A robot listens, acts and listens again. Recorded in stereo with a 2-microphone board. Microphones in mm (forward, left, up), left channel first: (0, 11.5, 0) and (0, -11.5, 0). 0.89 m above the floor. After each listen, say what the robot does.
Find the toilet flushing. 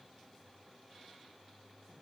Keep listening.
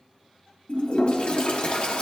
Turn 55° left.
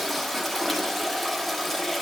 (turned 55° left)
Found it: a toilet flushing, straight ahead.